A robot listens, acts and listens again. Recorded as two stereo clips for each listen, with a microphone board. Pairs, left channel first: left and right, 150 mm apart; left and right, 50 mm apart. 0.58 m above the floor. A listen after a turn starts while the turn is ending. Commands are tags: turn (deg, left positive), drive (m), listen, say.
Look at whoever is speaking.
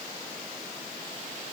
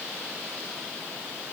<listen/>
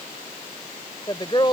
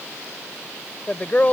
<turn deg="35"/>
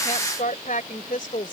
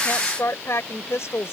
<turn deg="110"/>
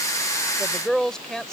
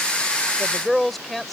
<say>Facing the woman speaking.</say>